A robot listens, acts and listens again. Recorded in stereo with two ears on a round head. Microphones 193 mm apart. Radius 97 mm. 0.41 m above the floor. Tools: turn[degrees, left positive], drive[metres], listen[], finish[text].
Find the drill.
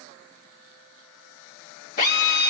Thought: The drill: about 45° left or 135° left.
Action: turn[45]
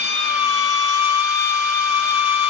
Thought: So it is at 85° left.
Action: turn[85]
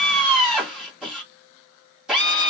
Action: finish[Facing the drill.]